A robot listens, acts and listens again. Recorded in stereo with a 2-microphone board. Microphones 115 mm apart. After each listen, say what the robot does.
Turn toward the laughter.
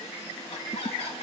Turn 65° left.
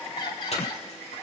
Keep listening.
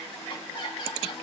Turn 50° left.
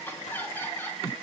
Turn 20° left.
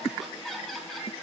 Facing the laughter, over 4 m away.